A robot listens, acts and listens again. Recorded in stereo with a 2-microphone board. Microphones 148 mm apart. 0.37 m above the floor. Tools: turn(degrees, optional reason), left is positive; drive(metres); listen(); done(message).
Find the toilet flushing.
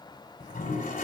turn(degrees=70, reason="The toilet flushing: about 70° left or 110° left.")
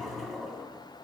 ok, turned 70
done("Facing the toilet flushing.")